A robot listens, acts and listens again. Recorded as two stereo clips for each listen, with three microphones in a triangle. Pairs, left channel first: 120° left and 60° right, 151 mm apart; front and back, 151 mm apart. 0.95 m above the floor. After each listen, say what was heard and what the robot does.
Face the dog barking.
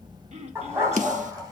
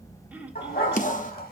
The dog barking: 10° left. Turn 10° left.
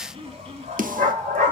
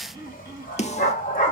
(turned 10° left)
The dog barking is now 20° right. Turn 20° right.
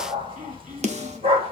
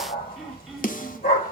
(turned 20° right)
The dog barking is now 15° right. Turn 15° right.
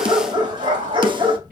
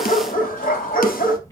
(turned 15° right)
Facing the dog barking.